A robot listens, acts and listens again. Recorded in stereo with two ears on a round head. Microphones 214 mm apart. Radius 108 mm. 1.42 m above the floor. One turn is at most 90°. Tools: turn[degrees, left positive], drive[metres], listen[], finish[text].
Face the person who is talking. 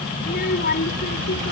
Thought: The child speaking: about 40° left or 140° left.
Action: turn[40]
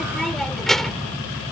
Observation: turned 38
Action: finish[Facing the child speaking.]